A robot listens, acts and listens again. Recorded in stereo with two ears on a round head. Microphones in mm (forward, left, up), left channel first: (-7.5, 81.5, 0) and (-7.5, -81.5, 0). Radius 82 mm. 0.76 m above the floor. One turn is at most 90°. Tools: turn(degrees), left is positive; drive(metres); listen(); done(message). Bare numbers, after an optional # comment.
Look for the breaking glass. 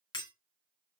# The breaking glass: about 25° left or 155° left.
turn(25)
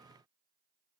listen()
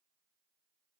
done("I heard breaking glass, but can't make it out now. It was about straight ahead or 130° left.")